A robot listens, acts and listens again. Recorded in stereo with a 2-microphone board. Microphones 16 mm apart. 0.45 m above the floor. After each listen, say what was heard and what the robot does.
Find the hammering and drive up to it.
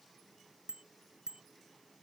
Keep listening.
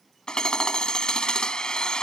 The hammering: about 75° left or 105° left. Turn 75° left.
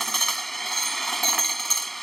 So it is at 10° left. Turn 10° left.
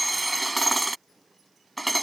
Drive 1.0 m forward.
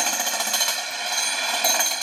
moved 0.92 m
Drive 1.0 m forward.
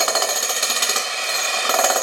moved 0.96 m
Drive 1.0 m forward.
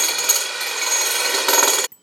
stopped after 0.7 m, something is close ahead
I am next to the hammering.